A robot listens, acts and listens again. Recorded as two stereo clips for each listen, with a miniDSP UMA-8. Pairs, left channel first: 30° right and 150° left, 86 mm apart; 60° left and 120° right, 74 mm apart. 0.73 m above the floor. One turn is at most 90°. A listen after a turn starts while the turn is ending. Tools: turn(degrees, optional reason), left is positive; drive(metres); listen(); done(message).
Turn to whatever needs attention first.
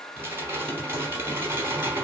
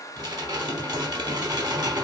listen()
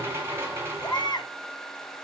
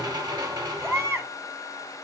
turn(degrees=-65, reason="The baby crying: 65° right.")
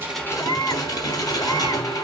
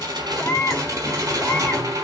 done("Facing the baby crying.")